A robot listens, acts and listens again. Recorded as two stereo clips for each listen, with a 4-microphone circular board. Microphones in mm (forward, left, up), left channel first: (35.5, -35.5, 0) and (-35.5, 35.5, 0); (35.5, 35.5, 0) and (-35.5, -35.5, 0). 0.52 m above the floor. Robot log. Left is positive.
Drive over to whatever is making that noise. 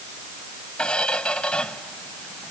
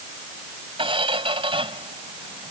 note: The squeak: 125° right.
cmd yaw -125
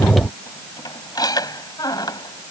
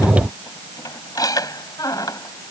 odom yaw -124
cmd fwd 1.0
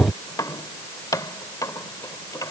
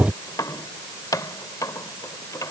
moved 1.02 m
cmd fwd 1.0
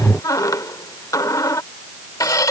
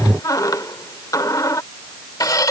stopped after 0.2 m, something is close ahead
end: Arrived at the squeak, straight ahead.